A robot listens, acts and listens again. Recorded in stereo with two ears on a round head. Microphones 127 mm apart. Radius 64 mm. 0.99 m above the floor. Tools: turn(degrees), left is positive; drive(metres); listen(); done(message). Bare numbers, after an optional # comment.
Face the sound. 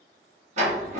# The sliding door: about 50° right or 130° right.
turn(-50)
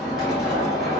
done("Facing the sliding door.")